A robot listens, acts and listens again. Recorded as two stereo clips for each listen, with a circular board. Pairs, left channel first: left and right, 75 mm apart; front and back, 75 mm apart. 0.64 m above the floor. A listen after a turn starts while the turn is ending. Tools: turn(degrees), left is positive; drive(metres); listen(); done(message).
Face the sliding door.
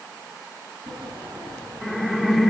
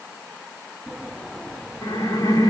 turn(degrees=-80)
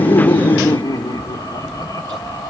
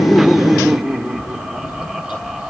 turn(degrees=15)
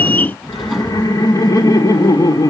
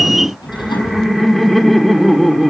done("Facing the sliding door, over 4 m away.")